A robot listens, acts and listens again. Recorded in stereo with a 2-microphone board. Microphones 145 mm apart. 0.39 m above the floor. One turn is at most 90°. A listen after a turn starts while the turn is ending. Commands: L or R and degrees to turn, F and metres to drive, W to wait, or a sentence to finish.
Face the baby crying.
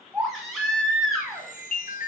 L30
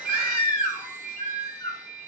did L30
L90
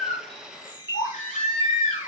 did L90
L60
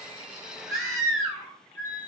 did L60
Facing the baby crying.